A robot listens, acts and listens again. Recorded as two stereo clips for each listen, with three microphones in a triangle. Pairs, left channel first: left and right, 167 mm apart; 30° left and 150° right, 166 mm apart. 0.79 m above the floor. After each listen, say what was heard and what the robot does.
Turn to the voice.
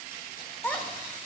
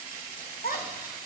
The child speaking: 10° left. Turn 10° left.
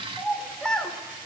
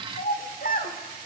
Facing the child speaking.